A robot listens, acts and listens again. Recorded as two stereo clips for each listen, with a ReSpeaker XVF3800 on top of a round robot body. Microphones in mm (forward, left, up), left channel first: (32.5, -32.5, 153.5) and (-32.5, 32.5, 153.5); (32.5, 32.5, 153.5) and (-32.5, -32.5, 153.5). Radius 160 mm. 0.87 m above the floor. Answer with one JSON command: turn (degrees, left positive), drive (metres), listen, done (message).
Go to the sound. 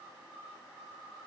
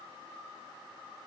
{"listen": true}
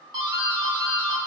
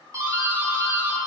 {"turn": 170}
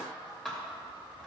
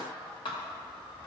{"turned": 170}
{"turn": 40}
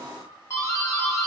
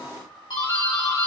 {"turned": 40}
{"turn": 10}
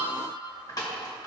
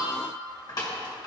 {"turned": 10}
{"drive": 1.0}
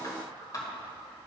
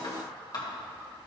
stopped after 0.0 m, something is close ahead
{"done": "Something is in my way. I am facing the doorbell but have not reached it."}